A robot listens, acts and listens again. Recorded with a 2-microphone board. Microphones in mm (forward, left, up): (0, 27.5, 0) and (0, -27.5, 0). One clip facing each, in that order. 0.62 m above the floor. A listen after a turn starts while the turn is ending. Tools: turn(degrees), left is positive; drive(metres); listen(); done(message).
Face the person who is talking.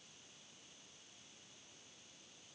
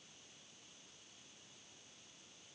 listen()
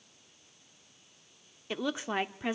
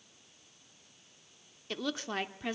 turn(degrees=15)
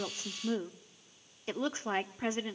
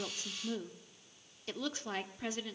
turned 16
turn(degrees=150)
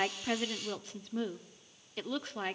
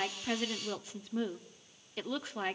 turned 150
done("Facing the woman speaking, 1 to 2 m away.")